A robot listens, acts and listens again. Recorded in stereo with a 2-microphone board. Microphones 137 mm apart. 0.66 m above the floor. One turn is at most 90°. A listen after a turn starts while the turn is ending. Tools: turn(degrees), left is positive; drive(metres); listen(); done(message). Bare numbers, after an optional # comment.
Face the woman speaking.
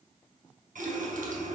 listen()
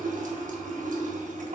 listen()
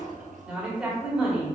turn(-30)
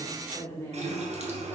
# So it is at 20° left.
turn(20)
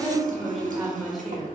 done("Found it: a woman speaking, straight ahead, 1 to 2 m away.")